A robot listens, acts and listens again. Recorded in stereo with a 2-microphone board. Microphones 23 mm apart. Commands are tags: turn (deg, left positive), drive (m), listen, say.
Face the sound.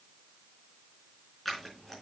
<turn deg="30"/>
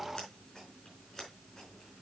<turn deg="145"/>
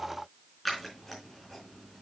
<say>Found it: scissors, straight ahead, over 4 m away.</say>